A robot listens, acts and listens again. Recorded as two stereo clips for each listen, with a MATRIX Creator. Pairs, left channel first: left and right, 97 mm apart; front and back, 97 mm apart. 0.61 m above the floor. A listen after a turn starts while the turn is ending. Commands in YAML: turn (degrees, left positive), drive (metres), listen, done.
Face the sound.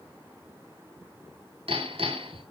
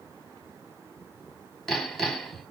turn: -90
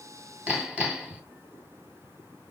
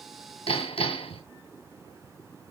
turn: -10
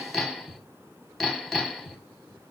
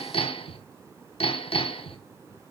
done: "Found it: hammering, straight ahead, 2 to 4 m away."